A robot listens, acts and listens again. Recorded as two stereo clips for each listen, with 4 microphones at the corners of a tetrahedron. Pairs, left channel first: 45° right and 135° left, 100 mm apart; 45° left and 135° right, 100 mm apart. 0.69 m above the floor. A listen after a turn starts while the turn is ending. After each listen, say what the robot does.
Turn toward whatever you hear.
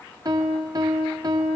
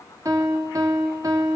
Turn 175° left.
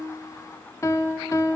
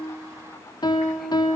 Facing the piano.